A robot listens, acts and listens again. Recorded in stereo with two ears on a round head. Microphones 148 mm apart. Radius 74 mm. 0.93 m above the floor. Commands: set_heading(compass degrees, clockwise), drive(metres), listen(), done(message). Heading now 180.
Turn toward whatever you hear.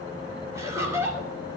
set_heading(195)
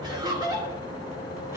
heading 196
set_heading(221)
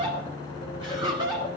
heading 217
set_heading(242)
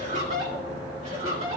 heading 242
set_heading(22)
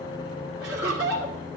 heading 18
done("Facing the laughter, 2 to 4 m away.")